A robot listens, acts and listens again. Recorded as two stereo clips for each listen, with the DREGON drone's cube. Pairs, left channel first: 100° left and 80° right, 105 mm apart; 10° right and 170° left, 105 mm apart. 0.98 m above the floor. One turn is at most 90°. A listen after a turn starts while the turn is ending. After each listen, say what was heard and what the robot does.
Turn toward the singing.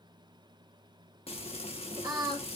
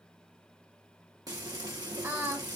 The singing: 125° right. Turn 90° right.
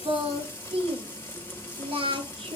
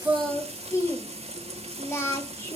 The singing is now 75° right. Turn 75° right.
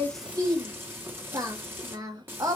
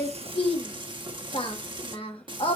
The singing is now 30° right. Turn 30° right.
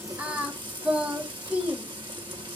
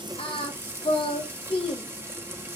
Facing the singing, 1 to 2 m away.